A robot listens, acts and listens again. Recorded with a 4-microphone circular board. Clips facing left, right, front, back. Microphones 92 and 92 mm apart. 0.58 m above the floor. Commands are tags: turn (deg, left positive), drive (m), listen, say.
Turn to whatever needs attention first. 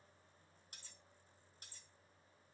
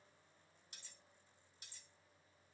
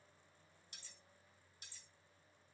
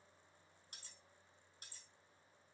<listen/>
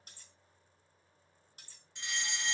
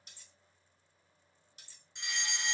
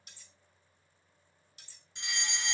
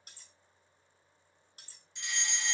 <turn deg="-25"/>
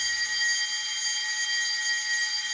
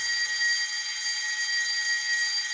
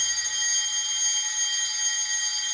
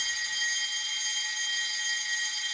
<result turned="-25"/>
<say>Facing the fire alarm.</say>